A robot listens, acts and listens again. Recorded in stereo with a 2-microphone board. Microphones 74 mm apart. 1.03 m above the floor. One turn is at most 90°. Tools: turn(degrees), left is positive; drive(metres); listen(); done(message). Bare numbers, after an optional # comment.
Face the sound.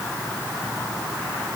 listen()
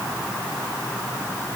listen()
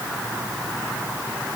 done("I can't make out anything to turn to.")